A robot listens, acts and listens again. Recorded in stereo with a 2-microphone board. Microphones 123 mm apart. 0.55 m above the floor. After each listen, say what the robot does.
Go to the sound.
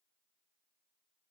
Keep listening.
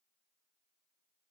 Keep listening.
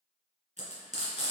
Turn 90° right.
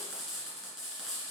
Drive 1.0 m forward.
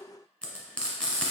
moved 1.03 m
Turn 10° left.
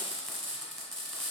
Drive 1.0 m forward.
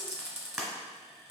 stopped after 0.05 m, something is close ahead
Arrived at the frying, straight ahead.